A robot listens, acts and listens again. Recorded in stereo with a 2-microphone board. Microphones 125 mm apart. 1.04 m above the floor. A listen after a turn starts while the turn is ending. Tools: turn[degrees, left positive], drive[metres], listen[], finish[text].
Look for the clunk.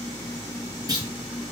Thought: The clunk: about 30° right or 150° right.
Action: turn[-30]
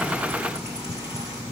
Action: listen[]
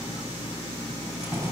Action: finish[I heard a clunk, but can't make it out now. It was about straight ahead or 120° right.]